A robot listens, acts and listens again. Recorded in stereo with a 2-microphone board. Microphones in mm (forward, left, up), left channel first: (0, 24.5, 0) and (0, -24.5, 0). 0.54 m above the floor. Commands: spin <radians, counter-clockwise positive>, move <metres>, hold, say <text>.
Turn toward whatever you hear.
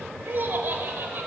spin -0.79
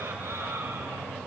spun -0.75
hold
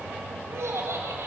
spin -1.92
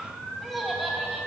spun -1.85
say Found it: laughter, straight ahead.